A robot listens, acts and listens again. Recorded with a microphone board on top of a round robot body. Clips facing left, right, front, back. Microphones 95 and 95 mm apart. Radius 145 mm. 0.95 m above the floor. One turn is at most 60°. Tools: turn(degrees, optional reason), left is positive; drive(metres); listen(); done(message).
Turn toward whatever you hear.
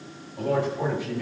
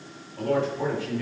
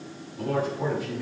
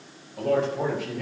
turn(degrees=60, reason="The man speaking: 160° left.")
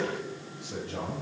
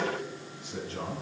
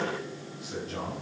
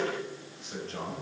turn(degrees=60, reason="The man speaking is now 85° left.")
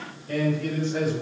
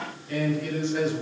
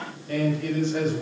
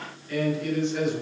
turn(degrees=45, reason="The man speaking is now 45° left.")
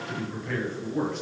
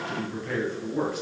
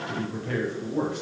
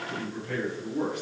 done("Facing the man speaking.")